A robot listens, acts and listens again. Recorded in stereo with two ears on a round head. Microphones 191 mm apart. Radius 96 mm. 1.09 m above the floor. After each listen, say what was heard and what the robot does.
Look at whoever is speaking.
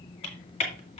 Keep listening.
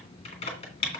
Keep listening.
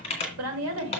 Turn 90° right.
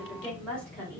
Found it: a woman speaking, straight ahead.